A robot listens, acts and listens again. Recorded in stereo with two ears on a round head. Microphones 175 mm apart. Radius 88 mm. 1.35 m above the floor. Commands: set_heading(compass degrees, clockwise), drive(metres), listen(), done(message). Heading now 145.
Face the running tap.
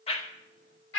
listen()
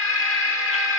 listen()
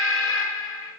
done("I can't make out a running tap to turn to.")